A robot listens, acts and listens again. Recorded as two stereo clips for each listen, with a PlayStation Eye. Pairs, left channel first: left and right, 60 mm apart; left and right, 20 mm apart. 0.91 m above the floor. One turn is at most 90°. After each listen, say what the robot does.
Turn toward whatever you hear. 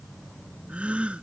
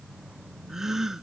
Turn 20° right.
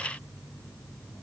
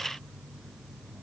Keep listening.
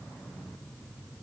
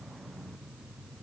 I heard a gasp, but can't make it out now. It was about straight ahead or 140° right.